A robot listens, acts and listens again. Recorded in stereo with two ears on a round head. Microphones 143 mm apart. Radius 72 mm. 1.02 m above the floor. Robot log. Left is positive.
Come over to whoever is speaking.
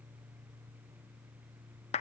cmd idle
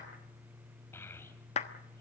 cmd yaw +30
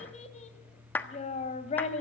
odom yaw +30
note: So it is at 135° left.
cmd yaw +135
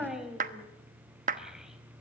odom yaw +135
cmd fwd 1.0
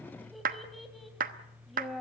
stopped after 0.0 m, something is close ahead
end: Something is in my way. I am facing the child speaking but have not reached it.